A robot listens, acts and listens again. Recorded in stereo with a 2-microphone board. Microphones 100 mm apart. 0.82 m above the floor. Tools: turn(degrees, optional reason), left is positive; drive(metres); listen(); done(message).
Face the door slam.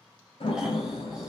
turn(degrees=70, reason="The door slam: about 70° left or 110° left.")
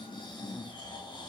listen()
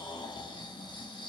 done("I heard a door slam, but can't make it out now. It was about straight ahead or 40° left.")